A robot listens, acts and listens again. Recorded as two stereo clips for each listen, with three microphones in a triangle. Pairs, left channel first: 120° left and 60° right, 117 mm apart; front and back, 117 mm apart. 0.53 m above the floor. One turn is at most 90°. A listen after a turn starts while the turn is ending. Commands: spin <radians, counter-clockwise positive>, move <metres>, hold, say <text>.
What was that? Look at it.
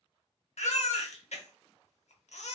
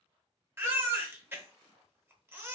spin 1.57
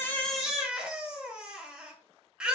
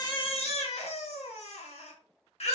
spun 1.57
spin 0.35
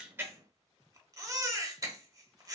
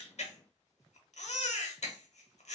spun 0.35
say Facing the baby crying.